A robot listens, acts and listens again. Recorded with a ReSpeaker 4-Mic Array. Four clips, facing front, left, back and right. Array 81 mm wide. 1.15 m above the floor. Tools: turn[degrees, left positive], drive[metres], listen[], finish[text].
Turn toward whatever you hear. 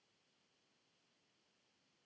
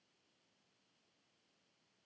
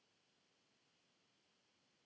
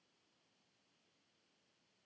Action: listen[]
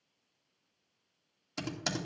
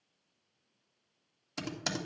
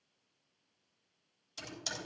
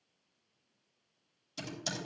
Thought: The typing on a keyboard: 50° left.
Action: turn[50]
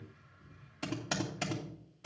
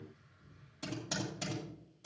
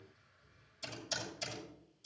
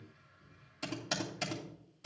Thought: The typing on a keyboard is now 20° right.
Action: turn[-20]
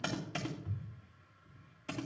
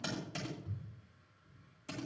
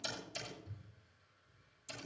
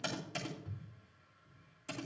Action: finish[Found it: typing on a keyboard, straight ahead, 2 to 4 m away.]